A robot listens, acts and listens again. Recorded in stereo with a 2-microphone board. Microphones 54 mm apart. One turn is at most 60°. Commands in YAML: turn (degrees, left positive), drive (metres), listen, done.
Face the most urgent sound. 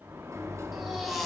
turn: 30
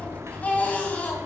turn: 60
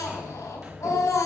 turn: 60
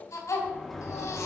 turn: 60
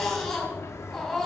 done: "Found it: a baby crying, straight ahead, 2 to 4 m away."